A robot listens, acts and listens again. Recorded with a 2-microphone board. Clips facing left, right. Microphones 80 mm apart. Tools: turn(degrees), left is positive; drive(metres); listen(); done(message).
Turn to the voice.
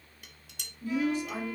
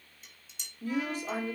turn(degrees=-35)
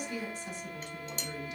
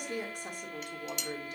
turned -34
turn(degrees=-40)
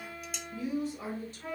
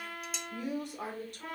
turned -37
turn(degrees=-125)
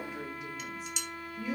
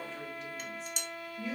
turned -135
done("Found it: a woman speaking, straight ahead, 2 to 4 m away.")